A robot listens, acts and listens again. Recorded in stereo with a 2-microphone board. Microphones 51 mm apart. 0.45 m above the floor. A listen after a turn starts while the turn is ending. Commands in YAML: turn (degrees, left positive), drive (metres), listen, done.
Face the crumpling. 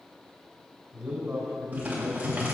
turn: -30
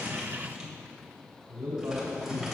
turn: -10
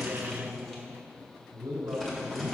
done: "Facing the crumpling, 2 to 4 m away."